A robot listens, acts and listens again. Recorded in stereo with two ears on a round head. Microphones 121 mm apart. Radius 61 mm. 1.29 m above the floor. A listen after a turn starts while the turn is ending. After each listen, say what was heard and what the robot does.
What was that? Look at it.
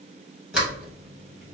Turn 30° right.
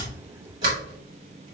So it is at 140° right. Turn 140° right.
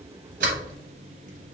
Keep listening.
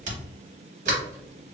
The sliding door is now 55° right. Turn 55° right.
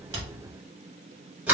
The sliding door is now 10° right. Turn 10° right.
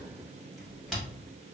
Found it: a sliding door, straight ahead, 1 to 2 m away.